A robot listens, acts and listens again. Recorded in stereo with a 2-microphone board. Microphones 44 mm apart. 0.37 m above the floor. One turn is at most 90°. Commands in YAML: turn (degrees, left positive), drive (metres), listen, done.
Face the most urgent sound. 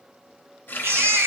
turn: -70
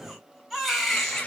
done: "Found it: a baby crying, straight ahead, 1 to 2 m away."